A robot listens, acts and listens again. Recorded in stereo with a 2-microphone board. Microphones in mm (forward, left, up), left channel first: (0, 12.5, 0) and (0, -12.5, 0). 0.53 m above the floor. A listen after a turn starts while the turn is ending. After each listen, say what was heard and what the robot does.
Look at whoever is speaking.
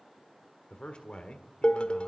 The man speaking: about 50° left or 130° left. Turn 50° left.
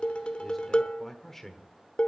So it is at 20° left. Turn 20° left.
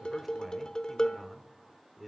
Facing the man speaking.